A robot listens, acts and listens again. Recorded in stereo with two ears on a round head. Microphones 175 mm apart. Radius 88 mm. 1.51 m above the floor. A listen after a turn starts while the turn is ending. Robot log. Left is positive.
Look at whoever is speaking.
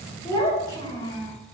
note: The child speaking: about 20° left or 160° left.
cmd yaw +20
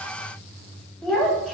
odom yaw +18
end: Facing the child speaking.